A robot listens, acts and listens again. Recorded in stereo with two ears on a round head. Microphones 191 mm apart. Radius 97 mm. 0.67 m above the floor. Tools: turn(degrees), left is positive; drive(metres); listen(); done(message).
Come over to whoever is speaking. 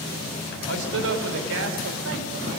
turn(degrees=-65)
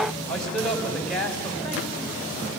drive(metres=1.0)
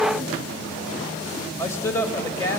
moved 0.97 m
turn(degrees=15)
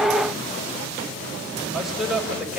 drive(metres=1.0)
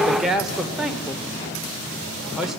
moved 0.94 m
drive(metres=1.0)
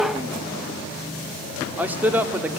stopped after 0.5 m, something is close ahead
turn(degrees=-10)
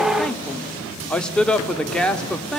done("I am next to the man speaking.")